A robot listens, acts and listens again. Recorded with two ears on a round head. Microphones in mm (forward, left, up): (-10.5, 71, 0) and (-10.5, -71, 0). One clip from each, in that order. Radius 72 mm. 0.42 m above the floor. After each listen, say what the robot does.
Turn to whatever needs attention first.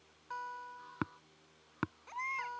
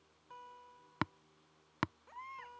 Turn 90° left.
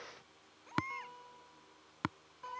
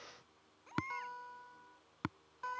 Found it: a baby crying, straight ahead.